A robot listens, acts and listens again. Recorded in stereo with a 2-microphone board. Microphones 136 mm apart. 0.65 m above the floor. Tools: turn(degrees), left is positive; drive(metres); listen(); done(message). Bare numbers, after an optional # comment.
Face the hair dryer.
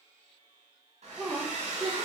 # The hair dryer: about 55° right or 125° right.
turn(-55)
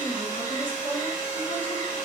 # So it is at 65° right.
turn(-65)
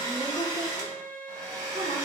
# The hair dryer is now 25° right.
turn(-25)
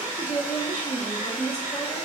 # The hair dryer is now 10° right.
turn(-10)
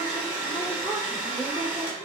done("Facing the hair dryer, 1 to 2 m away.")